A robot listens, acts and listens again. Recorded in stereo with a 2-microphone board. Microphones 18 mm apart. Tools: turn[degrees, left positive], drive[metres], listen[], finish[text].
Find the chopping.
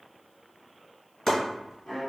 Thought: The chopping: about 30° left or 150° left.
Action: turn[30]
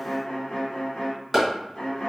Action: finish[Facing the chopping.]